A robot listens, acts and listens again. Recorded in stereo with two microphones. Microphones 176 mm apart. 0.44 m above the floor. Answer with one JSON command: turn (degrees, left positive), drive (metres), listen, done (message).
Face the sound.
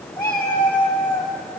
{"turn": 30}
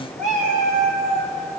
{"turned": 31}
{"turn": -60}
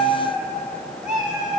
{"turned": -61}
{"turn": -25}
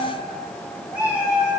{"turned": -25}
{"turn": -10}
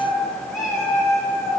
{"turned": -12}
{"done": "Found it: a cat meowing, straight ahead."}